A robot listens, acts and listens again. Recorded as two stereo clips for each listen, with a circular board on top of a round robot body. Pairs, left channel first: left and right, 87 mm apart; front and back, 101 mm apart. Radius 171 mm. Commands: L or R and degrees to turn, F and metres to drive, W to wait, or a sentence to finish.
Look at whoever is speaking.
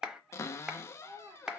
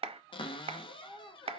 R50
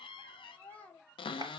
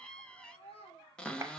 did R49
L20
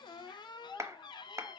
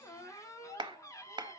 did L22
L10
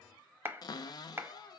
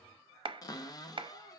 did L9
W
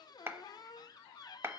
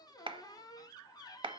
W
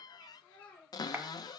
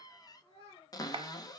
L15
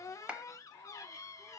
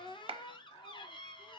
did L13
W
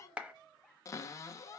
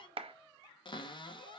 W
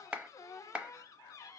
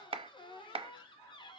I heard a child speaking from this way, but can't make it out now.